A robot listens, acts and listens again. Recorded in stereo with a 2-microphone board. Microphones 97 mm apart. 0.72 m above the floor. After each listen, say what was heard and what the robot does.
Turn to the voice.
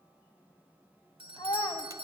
The child speaking: about 40° left or 140° left. Turn 40° left.
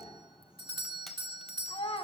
So it is at 105° left. Turn 105° left.
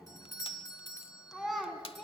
Found it: a child speaking, straight ahead, over 4 m away.